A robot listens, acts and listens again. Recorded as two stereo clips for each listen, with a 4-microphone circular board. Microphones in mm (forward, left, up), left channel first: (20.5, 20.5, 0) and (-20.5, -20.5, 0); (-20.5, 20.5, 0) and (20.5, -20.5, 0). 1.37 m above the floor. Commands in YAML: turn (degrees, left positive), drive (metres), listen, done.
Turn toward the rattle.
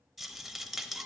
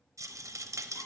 turn: -45
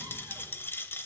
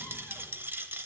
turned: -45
done: "Facing the rattle."